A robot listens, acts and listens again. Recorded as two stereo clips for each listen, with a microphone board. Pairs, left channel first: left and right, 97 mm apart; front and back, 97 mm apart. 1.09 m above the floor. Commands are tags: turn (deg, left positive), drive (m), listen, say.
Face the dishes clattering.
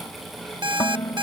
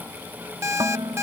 <turn deg="140"/>
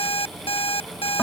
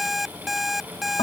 <listen/>
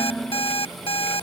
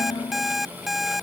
<say>Found it: dishes clattering, straight ahead.</say>